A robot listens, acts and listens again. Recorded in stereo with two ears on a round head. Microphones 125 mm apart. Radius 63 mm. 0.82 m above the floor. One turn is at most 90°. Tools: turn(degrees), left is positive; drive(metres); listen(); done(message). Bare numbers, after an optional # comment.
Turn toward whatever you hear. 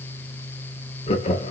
# The laughter: about 45° left or 135° left.
turn(45)
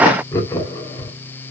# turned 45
# So it is at 25° left.
turn(25)
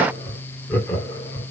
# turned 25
# The laughter is now 20° left.
turn(20)
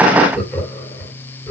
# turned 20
# The laughter is now 10° left.
turn(10)
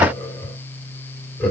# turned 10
done("Found it: laughter, straight ahead.")